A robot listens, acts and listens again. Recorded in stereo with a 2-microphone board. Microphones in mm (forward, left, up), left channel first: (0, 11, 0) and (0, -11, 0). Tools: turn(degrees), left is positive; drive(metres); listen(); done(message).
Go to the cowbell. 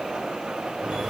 listen()
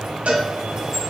turn(degrees=-75)
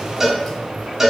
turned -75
turn(degrees=-15)
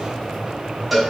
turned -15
drive(metres=1.0)
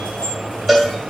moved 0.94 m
drive(metres=1.0)
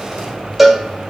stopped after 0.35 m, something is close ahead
turn(degrees=-15)
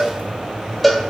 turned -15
done("Arrived at the cowbell, straight ahead.")